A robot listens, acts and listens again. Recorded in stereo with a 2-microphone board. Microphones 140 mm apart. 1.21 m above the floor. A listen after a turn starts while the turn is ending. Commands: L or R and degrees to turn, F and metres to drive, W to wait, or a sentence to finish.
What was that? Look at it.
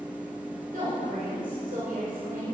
R90
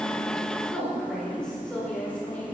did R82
L10
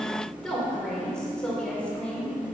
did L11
L10
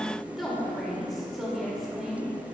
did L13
Facing the woman speaking, over 4 m away.